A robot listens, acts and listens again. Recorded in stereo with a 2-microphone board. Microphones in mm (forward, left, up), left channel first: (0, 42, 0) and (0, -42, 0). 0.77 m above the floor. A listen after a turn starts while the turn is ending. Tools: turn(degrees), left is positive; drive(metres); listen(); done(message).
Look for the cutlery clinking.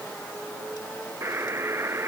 listen()
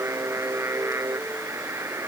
listen()
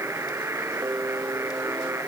done("I can't make out cutlery clinking to turn to.")